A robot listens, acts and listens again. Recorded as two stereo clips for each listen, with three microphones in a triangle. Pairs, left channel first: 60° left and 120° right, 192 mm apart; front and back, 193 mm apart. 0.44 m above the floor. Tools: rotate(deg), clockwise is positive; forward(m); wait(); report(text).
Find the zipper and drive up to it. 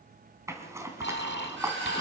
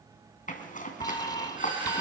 rotate(45)
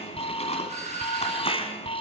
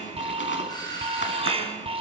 wait()
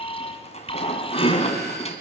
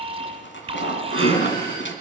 forward(1.0)
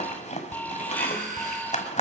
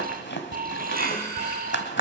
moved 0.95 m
rotate(-10)
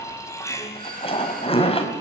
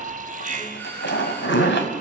forward(1.0)
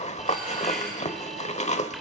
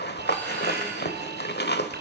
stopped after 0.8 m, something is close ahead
rotate(-10)
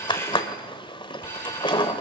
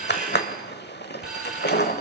report("Arrived at the zipper, straight ahead.")